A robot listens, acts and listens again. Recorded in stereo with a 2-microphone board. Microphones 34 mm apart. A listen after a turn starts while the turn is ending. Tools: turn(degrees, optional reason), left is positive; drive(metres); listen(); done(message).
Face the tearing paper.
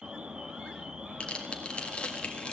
turn(degrees=35, reason="The tearing paper: about 35° left or 145° left.")
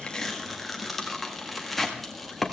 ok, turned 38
done("Facing the tearing paper.")